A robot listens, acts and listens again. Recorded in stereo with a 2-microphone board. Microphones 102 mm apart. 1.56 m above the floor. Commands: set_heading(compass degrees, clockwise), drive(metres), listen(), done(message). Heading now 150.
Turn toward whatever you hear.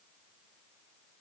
listen()
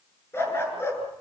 set_heading(125)
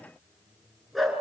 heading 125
done("Found it: a dog barking, straight ahead.")